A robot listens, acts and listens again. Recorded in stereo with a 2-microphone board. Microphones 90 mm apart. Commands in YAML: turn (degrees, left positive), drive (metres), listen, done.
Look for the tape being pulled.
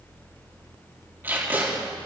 turn: -25
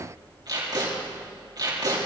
turn: -130
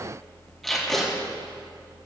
done: "Found it: tape being pulled, straight ahead, over 4 m away."